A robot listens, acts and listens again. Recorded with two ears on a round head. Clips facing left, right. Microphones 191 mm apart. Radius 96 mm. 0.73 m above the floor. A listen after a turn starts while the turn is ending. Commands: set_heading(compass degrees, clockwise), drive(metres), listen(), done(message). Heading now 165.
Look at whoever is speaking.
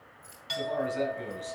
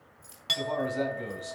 set_heading(195)
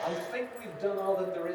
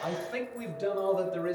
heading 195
set_heading(320)
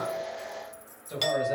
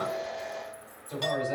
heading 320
set_heading(305)
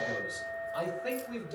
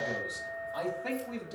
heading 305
set_heading(295)
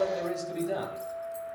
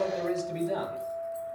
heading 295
done("Found it: a man speaking, straight ahead.")